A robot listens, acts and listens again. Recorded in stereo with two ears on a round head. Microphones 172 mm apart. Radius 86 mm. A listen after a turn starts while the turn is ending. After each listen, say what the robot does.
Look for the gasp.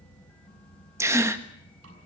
Turn 30° right.
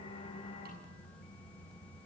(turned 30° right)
Keep listening.
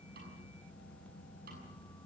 I heard a gasp, but can't make it out now. It was about 15° left or 135° right.